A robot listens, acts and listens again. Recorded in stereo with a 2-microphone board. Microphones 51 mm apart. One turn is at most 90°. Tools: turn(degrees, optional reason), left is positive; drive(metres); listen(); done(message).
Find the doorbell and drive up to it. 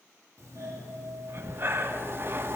turn(degrees=-70, reason="The doorbell: about 70° right or 110° right.")
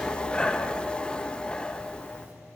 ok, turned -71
turn(degrees=-35, reason="So it is at 35° right.")
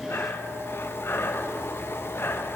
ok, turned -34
listen()
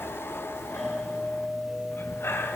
drive(metres=1.0)
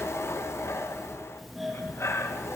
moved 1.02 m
drive(metres=1.0)
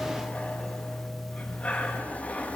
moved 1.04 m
drive(metres=1.0)
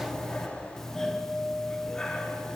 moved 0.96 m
turn(degrees=10, reason="The doorbell is now 10° left.")
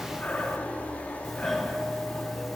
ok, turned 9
drive(metres=1.0)
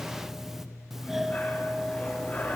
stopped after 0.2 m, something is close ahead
done("I am next to the doorbell.")